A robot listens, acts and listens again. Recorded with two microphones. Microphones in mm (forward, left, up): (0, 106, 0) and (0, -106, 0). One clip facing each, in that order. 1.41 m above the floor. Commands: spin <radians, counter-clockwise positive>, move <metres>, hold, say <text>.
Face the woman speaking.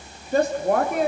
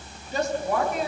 spin 1.05
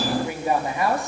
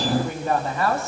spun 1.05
spin 0.26
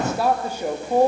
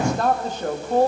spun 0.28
spin 0.26
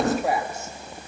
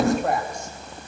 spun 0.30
say Found it: a woman speaking, straight ahead, 2 to 4 m away.